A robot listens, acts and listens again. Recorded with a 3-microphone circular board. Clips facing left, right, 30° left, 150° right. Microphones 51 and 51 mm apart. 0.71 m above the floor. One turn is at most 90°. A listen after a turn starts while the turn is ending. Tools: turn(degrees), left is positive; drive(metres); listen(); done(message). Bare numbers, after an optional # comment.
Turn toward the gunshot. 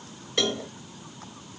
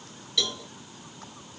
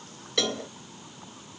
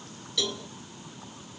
listen()
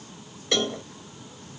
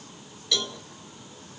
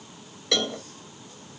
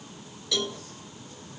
listen()
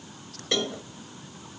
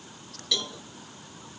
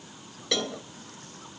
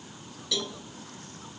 done("I can't make out a gunshot to turn to.")